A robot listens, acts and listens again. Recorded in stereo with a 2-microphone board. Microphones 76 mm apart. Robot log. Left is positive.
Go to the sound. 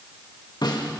note: The snare drum: about 70° left or 110° left.
cmd yaw +70
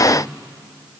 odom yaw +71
cmd idle
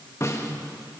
note: So it is at 40° left.
cmd yaw +40
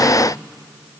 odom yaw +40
cmd idle
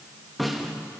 cmd fwd 1.0
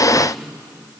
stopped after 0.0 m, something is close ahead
end: Something is in my way. I am facing the snare drum but have not reached it.